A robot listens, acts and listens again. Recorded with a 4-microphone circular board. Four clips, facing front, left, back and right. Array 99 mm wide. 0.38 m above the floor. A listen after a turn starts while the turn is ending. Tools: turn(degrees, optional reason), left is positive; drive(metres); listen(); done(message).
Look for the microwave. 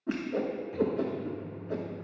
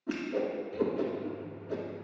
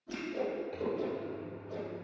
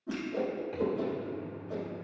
turn(degrees=-105, reason="The microwave: 105° right.")
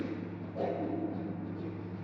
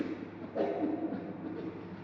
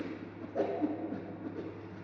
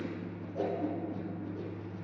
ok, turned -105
turn(degrees=30, reason="The microwave is now 30° left.")
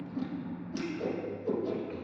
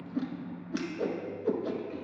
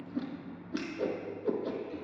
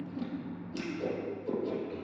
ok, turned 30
done("Facing the microwave.")